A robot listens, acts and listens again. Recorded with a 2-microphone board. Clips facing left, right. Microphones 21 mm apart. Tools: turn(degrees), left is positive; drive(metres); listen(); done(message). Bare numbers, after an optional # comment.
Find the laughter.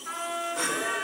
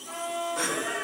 turn(30)
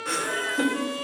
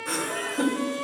# So it is at 155° left.
turn(155)
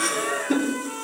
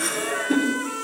# The laughter is now 10° left.
turn(10)
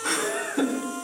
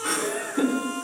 done("Facing the laughter, 2 to 4 m away.")